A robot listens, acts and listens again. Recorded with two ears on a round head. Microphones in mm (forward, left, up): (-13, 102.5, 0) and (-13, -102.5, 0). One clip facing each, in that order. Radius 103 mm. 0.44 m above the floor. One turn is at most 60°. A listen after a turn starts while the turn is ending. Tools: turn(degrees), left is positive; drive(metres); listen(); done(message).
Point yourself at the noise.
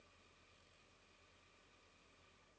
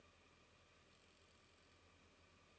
listen()
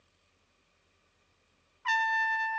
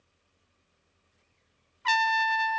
turn(degrees=-50)
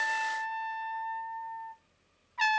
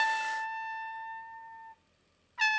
turn(degrees=-10)
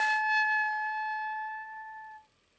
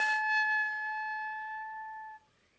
done("Found it: a trumpet, straight ahead.")